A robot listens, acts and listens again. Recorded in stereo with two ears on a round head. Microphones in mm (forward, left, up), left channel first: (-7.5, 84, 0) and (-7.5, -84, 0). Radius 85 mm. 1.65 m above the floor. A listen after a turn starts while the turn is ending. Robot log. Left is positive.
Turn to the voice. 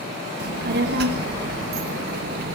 note: The child speaking: about 55° right or 125° right.
cmd yaw -55
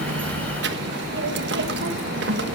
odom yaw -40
note: So it is at 75° right.
cmd yaw -75
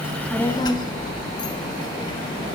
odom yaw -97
note: The child speaking is now 25° left.
cmd yaw +25
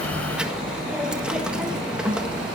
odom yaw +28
end: Found it: a child speaking, straight ahead.